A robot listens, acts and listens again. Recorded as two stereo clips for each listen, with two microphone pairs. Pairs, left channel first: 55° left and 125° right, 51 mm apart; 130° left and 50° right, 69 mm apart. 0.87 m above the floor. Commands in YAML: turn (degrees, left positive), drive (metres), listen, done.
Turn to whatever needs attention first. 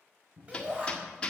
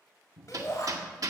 turn: 170
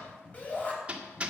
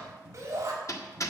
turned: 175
done: "Found it: a shout, straight ahead, over 4 m away."